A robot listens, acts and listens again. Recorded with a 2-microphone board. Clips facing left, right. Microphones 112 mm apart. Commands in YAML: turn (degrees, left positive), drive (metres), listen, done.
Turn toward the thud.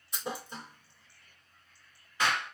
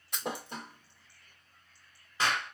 turn: -70
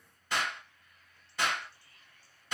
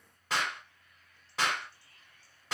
listen: true
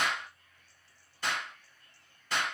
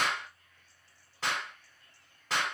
done: "I heard a thud, but can't make it out now. It was about straight ahead or 40° right."